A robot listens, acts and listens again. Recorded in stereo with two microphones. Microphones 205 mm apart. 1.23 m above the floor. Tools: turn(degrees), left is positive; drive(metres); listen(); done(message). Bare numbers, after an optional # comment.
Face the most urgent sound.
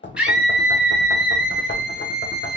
turn(-30)
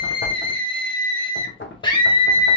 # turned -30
# So it is at 25° left.
turn(25)
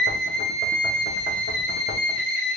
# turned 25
done("Found it: a scream, straight ahead.")